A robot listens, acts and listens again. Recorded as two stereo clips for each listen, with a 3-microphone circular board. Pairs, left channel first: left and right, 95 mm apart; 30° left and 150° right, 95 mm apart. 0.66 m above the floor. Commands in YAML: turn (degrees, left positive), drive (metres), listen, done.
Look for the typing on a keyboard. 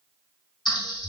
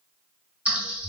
turn: 135
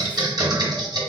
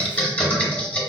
turn: -45
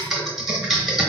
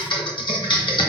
done: "Found it: typing on a keyboard, straight ahead."